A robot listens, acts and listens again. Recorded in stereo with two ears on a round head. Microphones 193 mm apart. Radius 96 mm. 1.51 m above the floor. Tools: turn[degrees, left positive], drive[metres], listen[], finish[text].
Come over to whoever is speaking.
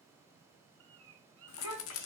Action: turn[90]
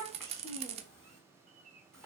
Action: drive[1.0]
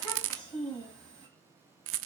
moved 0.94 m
Action: drive[1.0]
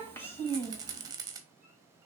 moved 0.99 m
Thought: The child speaking is now 10° left.
Action: turn[10]
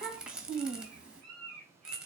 Action: drive[1.0]
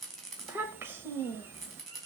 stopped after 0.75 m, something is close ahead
Thought: The child speaking is now 10° right.
Action: turn[-10]
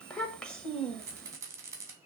Action: finish[I am next to the child speaking.]